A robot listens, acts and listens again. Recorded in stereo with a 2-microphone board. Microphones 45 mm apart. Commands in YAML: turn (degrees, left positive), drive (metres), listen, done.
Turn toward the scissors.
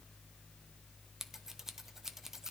turn: -30
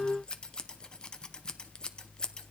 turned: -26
turn: 20
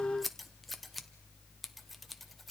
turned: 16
done: "Found it: scissors, straight ahead, 1 to 2 m away."